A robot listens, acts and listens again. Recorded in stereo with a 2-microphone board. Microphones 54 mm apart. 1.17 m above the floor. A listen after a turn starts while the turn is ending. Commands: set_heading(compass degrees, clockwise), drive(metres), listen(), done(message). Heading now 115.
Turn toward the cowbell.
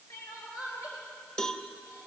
set_heading(100)
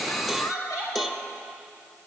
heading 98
done("Facing the cowbell.")